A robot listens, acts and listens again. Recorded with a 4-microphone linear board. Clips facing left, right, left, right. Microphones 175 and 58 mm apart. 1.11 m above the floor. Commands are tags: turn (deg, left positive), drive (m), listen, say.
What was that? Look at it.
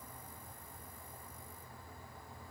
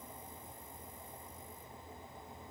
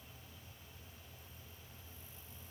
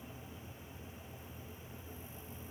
<listen/>
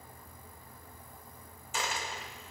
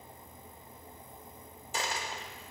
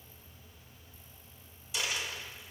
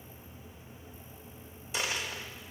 <turn deg="-35"/>
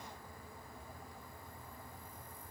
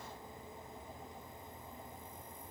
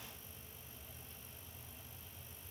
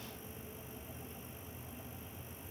<listen/>
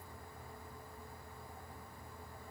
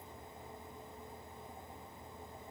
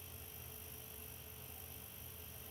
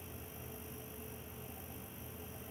<say>I heard a dropped coin, but can't make it out now. It was about straight ahead or 110° right.</say>